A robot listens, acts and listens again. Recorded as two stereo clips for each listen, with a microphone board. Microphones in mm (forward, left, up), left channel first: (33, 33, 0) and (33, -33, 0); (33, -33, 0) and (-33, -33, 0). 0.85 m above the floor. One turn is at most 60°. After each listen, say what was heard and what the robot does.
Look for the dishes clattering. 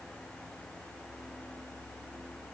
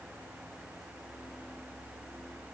Keep listening.
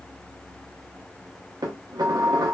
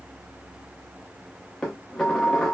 The dishes clattering: 80° right. Turn 60° right.
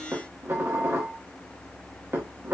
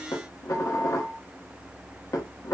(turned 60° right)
The dishes clattering is now 35° right. Turn 35° right.
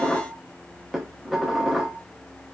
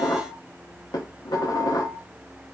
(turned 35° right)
Found it: dishes clattering, straight ahead, under 1 m away.